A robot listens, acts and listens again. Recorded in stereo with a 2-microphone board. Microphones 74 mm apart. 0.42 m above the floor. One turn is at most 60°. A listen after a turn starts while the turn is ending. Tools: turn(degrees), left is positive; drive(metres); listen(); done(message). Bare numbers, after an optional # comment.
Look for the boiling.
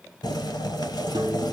# The boiling: about 70° left or 110° left.
turn(60)
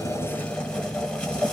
# So it is at 10° left.
turn(10)
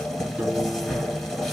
done("Found it: boiling, straight ahead, 1 to 2 m away.")